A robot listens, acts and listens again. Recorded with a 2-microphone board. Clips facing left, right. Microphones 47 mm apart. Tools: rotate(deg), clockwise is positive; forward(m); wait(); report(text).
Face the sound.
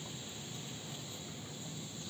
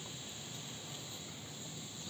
wait()
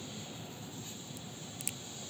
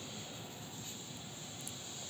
rotate(-90)
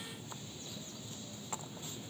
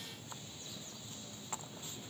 report("Facing where the crack came from. I can't hear it now.")